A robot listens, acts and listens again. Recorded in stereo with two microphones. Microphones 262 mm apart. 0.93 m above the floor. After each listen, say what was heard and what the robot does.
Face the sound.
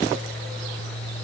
Keep listening.
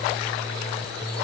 Keep listening.
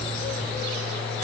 I can't make out anything to turn to.